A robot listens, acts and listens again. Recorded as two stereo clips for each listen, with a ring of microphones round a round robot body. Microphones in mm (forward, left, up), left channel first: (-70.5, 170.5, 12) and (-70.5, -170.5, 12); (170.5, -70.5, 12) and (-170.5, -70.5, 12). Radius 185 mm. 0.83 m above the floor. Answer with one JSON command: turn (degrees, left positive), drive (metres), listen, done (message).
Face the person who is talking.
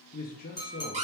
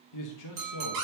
{"turn": 25}
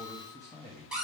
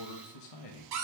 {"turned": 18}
{"turn": 10}
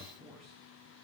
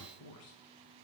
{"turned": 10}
{"done": "Facing the man speaking, under 1 m away."}